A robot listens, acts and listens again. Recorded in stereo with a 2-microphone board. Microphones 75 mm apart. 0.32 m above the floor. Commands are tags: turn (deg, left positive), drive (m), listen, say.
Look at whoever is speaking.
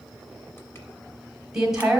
<turn deg="-30"/>
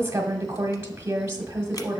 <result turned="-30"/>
<turn deg="-140"/>
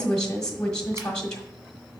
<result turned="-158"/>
<turn deg="15"/>
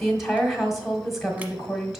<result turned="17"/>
<say>Facing the woman speaking.</say>